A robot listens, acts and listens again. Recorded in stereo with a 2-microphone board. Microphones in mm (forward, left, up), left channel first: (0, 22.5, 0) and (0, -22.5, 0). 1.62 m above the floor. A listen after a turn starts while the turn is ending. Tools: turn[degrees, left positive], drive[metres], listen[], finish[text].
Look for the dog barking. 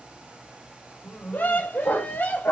Thought: The dog barking: about 65° left or 115° left.
Action: turn[65]
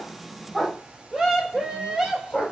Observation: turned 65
Action: finish[Found it: a dog barking, straight ahead.]